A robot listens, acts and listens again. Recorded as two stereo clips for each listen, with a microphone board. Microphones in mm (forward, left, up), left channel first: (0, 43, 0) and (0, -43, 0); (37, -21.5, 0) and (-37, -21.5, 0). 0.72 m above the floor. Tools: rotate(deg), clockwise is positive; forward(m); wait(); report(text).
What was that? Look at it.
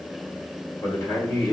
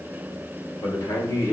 rotate(-40)
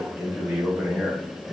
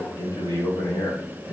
rotate(15)
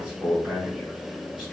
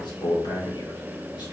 report("Facing the man speaking.")